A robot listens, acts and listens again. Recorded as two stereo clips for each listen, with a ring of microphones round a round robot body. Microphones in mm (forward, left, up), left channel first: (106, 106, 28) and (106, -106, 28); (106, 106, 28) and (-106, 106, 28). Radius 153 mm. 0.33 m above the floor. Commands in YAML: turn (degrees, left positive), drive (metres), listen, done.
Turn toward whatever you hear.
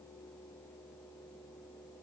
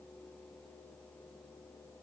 listen: true
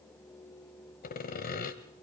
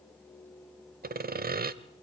turn: 140
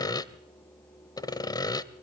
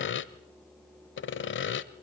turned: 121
turn: 20
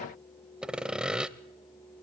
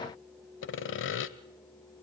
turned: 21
done: "Facing the sawing."